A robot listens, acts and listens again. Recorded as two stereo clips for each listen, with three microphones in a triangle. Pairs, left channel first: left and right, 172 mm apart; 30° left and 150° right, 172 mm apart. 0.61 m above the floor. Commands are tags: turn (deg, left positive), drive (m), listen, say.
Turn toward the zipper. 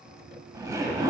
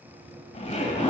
<turn deg="-20"/>
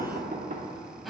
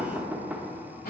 <say>Facing the zipper, 1 to 2 m away.</say>